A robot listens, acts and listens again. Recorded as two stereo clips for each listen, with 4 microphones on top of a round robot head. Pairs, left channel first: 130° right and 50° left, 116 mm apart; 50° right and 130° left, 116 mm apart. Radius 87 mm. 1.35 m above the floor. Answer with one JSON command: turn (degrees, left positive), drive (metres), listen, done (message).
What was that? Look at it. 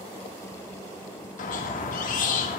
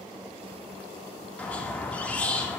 {"turn": -130}
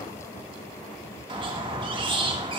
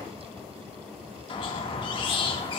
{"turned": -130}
{"done": "Facing the squeak, 1 to 2 m away."}